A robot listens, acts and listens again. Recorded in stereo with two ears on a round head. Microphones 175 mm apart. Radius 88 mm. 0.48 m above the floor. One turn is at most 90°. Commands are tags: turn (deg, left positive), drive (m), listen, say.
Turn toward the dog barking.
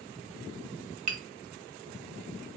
<listen/>
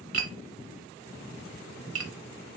<listen/>
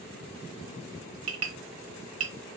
<say>I can't make out a dog barking to turn to.</say>